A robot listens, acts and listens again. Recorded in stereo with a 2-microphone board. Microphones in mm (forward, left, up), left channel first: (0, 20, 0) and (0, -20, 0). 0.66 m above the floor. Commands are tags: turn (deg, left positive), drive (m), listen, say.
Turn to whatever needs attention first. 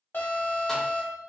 <turn deg="50"/>
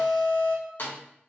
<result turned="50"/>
<turn deg="70"/>
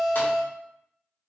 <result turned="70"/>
<say>Found it: an alarm, straight ahead.</say>